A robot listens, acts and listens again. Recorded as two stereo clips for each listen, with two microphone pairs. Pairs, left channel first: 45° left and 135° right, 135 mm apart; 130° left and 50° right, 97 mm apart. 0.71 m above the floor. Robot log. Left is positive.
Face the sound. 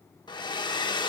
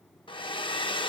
note: The hair dryer: 105° left.
cmd yaw +105
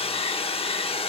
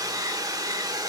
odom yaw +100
end: Facing the hair dryer, under 1 m away.